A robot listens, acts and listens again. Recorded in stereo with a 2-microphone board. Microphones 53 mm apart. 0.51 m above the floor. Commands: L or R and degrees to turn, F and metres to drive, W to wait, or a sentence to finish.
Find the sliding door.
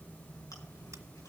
W
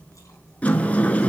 L25
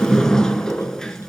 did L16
L10
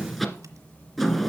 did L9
Found it: a sliding door, straight ahead.